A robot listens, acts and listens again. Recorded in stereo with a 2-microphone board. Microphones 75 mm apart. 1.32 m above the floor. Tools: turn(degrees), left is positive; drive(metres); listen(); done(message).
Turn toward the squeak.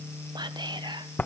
listen()
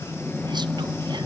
listen()
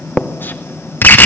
done("I can't make out a squeak to turn to.")